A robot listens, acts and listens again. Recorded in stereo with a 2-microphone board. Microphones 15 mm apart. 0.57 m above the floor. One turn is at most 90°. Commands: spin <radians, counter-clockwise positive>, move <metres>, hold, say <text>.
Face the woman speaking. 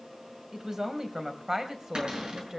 spin -0.70
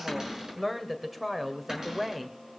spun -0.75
say Facing the woman speaking, 2 to 4 m away.